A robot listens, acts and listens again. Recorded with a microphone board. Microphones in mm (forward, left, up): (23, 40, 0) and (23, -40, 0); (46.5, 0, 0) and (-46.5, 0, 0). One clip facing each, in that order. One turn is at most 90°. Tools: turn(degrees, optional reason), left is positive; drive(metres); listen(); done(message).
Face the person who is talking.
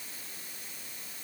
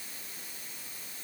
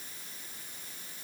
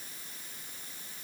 listen()
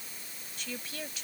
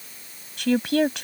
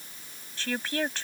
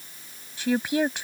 turn(degrees=-90, reason="The woman speaking: 105° right.")
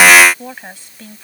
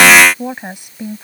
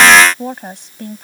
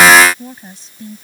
turn(degrees=-20, reason="The woman speaking is now 20° right.")
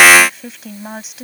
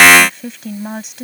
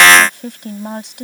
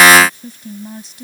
done("Facing the woman speaking.")